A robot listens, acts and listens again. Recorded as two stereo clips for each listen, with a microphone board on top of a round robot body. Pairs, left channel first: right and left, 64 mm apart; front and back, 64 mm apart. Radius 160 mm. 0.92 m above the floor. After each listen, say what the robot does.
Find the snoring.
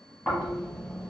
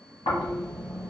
Turn 15° right.
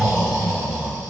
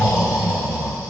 Found it: snoring, straight ahead.